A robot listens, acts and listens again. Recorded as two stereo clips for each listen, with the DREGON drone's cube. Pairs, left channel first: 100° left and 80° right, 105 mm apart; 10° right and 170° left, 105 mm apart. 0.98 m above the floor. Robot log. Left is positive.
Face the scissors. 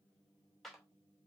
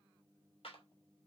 cmd idle
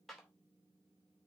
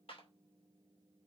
cmd idle
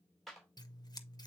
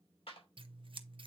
note: The scissors: 145° left.
cmd yaw +145
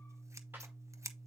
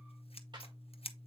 note: The scissors is now 15° right.
cmd yaw -15
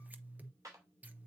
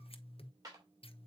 end: Facing the scissors, under 1 m away.